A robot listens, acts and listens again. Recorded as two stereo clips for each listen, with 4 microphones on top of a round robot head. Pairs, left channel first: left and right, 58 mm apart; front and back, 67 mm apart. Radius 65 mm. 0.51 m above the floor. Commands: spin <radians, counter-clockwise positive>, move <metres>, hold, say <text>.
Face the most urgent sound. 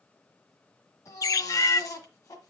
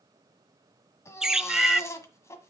spin 0.79
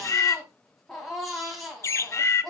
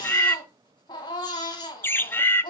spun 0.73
say Facing the baby crying, 1 to 2 m away.